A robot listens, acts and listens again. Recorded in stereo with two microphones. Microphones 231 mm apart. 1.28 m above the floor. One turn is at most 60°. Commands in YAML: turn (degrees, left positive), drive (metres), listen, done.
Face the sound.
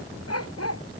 turn: 60
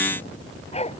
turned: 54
turn: 25
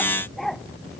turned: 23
done: "Found it: a dog barking, straight ahead."